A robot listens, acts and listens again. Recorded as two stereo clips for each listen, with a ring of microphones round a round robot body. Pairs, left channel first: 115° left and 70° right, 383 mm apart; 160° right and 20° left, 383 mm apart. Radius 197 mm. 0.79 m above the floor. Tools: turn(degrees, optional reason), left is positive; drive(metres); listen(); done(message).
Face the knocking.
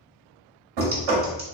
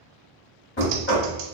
turn(degrees=-95, reason="The knocking: 95° right.")
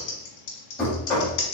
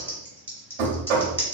turn(degrees=25, reason="The knocking is now 25° left.")
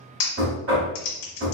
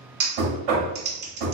done("Found it: knocking, straight ahead, 1 to 2 m away.")